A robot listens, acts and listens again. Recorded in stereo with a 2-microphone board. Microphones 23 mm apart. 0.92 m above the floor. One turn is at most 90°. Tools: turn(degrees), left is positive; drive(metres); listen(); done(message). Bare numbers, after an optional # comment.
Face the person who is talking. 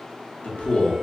# The man speaking: about 60° left or 120° left.
turn(60)
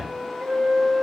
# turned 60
listen()
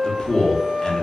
# So it is at 45° left.
turn(45)
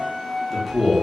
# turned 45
done("Facing the man speaking.")